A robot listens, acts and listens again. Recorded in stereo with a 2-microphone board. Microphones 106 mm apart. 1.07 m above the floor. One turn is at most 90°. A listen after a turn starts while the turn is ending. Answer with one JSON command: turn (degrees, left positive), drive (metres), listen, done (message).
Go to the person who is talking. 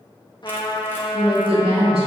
{"turn": -60}
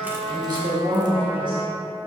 {"turn": -50}
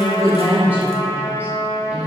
{"turn": -15}
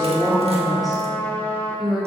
{"drive": 1.0}
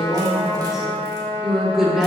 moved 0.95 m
{"drive": 1.0}
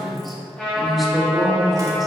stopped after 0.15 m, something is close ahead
{"done": "Arrived at the woman speaking, straight ahead."}